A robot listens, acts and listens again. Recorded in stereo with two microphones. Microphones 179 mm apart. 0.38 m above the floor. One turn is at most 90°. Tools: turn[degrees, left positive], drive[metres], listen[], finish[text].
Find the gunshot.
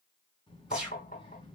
Action: turn[-30]
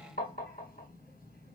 Action: listen[]
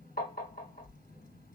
Action: finish[I heard a gunshot, but can't make it out now. It was about 25° left or 145° right.]